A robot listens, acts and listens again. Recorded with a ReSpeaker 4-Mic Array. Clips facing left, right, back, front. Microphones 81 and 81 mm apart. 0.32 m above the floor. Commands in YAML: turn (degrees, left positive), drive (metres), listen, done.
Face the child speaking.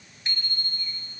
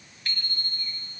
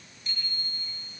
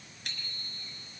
listen: true
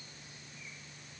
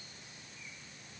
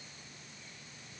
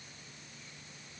listen: true
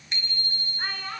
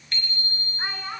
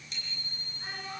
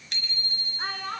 turn: -15
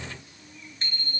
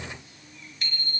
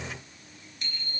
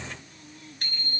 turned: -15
listen: true
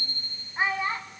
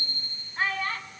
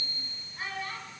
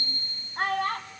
turn: 20
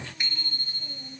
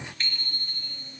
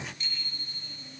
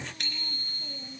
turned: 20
listen: true
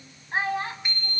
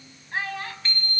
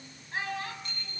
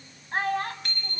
turn: 30
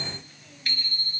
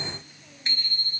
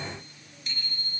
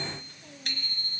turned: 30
listen: true
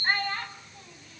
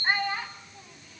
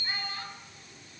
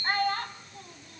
turn: -10
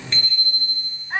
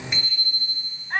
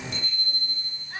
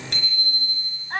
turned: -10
done: "Found it: a child speaking, straight ahead, 1 to 2 m away."